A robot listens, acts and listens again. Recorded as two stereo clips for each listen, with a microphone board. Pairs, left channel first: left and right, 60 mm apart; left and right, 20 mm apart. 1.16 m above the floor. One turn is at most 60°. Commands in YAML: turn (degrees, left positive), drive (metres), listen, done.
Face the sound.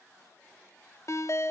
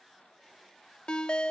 turn: 60
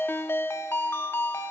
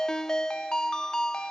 turn: 50
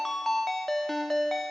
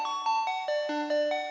done: "Facing the ringtone."